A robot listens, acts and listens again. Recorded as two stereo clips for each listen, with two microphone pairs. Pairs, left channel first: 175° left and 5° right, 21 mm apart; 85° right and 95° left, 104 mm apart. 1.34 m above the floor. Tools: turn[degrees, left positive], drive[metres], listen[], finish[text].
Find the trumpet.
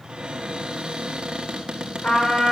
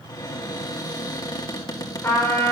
Thought: The trumpet: 155° right.
Action: turn[-155]
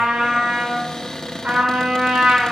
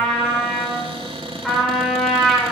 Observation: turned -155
Action: finish[Found it: a trumpet, straight ahead, over 4 m away.]